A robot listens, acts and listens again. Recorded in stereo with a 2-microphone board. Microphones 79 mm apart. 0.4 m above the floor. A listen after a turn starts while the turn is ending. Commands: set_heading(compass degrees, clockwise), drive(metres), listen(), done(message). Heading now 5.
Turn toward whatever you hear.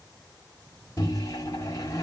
set_heading(320)
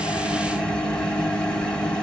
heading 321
set_heading(306)
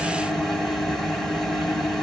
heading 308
done("Facing the microwave, 1 to 2 m away.")